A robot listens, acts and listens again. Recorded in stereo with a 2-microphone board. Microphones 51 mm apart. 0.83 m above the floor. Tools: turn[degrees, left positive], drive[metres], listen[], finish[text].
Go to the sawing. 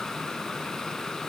Action: listen[]
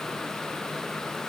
Action: listen[]
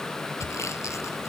Thought: The sawing: about 70° left or 110° left.
Action: turn[70]
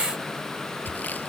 Thought: So it is at 35° left.
Action: turn[35]
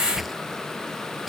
Action: drive[1.0]
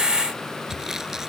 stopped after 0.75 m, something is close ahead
Thought: The sawing is now 10° right.
Action: turn[-10]
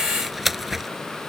Action: finish[Blocked. The sawing is further on, straight ahead.]